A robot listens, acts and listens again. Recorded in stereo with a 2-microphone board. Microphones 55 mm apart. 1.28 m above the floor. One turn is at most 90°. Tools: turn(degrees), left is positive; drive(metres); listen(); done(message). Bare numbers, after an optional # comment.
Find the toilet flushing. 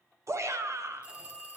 listen()
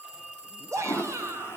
# The toilet flushing: about 45° left or 135° left.
turn(45)
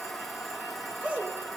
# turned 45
done("Facing the toilet flushing, 1 to 2 m away.")